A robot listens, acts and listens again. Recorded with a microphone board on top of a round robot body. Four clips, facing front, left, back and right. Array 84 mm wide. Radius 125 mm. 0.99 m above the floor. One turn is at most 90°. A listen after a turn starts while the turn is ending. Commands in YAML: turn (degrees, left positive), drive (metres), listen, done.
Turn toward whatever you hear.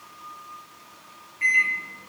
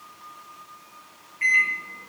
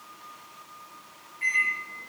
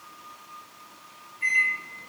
turn: 60
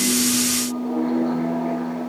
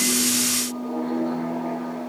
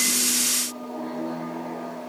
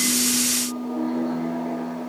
turn: 10
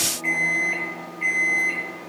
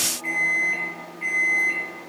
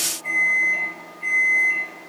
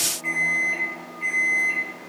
done: "Found it: a microwave, straight ahead."